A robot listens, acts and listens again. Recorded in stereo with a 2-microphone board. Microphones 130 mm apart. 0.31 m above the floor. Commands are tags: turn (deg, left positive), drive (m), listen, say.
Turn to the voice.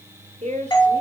<turn deg="-60"/>
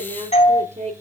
<turn deg="-65"/>
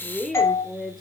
<say>Found it: a woman speaking, straight ahead, over 4 m away.</say>